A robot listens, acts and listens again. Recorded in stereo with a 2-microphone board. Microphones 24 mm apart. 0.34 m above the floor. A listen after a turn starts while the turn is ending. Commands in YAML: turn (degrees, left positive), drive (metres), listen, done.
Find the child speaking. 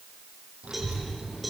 turn: -55
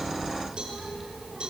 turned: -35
turn: -15
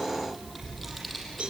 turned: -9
done: "Facing the child speaking, over 4 m away."